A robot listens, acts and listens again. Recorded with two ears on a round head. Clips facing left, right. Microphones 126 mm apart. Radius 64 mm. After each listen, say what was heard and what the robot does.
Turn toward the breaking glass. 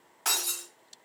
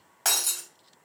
The breaking glass: about 65° right or 115° right. Turn 65° right.
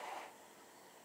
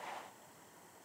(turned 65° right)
Keep listening.
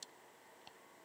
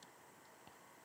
I heard breaking glass, but can't make it out now. It was about straight ahead or 50° right.